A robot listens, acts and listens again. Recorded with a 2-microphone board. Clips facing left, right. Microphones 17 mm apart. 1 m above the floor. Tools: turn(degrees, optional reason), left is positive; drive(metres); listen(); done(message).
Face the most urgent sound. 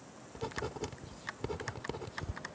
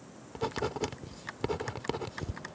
listen()
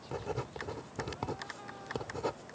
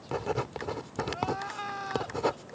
turn(degrees=-65, reason="The crying: about 65° right or 115° right.")
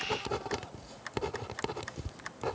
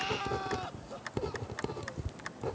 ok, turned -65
listen()
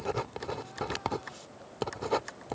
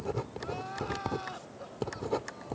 listen()
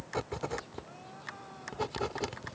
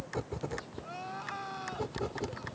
turn(degrees=-45, reason="So it is at 45° right.")
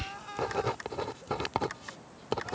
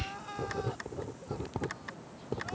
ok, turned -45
done("Facing the crying.")